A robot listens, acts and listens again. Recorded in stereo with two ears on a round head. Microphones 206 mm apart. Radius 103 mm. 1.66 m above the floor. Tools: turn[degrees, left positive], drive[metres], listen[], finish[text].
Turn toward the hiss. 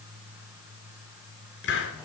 Thought: The hiss: about 55° left or 125° left.
Action: turn[55]
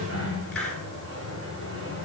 Action: finish[Facing the hiss.]